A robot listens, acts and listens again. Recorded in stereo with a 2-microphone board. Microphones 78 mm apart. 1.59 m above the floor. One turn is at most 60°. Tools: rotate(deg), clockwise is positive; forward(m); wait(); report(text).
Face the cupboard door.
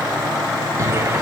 rotate(40)
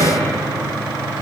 rotate(60)
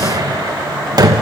rotate(55)
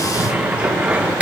rotate(15)
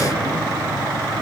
wait()
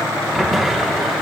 report("Facing the cupboard door.")